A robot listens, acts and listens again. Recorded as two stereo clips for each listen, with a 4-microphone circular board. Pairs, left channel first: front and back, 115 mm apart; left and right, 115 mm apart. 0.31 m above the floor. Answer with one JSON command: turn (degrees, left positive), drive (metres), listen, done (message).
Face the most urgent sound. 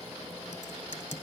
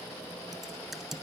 {"listen": true}
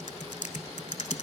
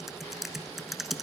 {"listen": true}
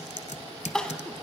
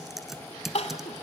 {"turn": 85}
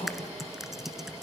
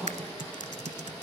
{"turn": -10}
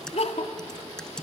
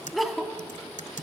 {"done": "Found it: crying, straight ahead."}